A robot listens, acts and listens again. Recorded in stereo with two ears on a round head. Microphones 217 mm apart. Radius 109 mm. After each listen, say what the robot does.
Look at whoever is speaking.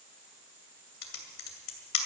Keep listening.
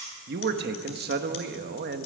Turn 45° right.
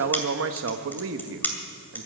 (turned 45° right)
Turn 75° right.
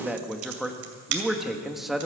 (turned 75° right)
Found it: a man speaking, straight ahead.